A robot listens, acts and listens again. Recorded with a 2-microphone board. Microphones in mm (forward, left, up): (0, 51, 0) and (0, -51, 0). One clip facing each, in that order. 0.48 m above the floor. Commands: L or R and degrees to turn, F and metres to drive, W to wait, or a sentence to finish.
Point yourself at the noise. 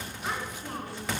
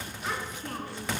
L30
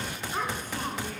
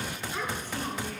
L135
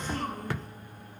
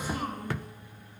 R10
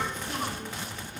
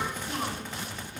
R10
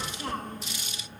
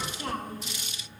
R10
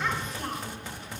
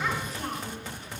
Found it: a child speaking, straight ahead, 2 to 4 m away.